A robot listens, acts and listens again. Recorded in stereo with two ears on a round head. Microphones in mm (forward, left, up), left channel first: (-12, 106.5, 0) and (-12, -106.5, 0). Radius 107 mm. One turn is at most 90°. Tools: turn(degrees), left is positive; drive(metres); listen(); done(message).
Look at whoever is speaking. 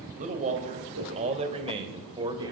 turn(degrees=-20)
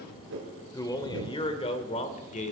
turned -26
turn(degrees=35)
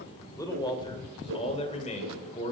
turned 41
turn(degrees=30)
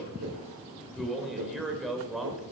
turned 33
done("Facing the man speaking.")